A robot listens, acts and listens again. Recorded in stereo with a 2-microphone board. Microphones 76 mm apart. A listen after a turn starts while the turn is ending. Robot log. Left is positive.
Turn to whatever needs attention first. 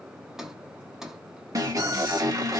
note: The alarm: about 55° right or 125° right.
cmd yaw -55
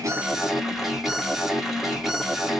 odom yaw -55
end: Facing the alarm.